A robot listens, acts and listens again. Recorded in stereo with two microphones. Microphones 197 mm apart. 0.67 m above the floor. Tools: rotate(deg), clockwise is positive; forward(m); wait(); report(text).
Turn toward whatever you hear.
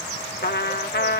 rotate(-60)
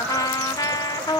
rotate(-25)
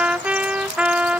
rotate(10)
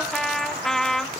report("Facing the trumpet.")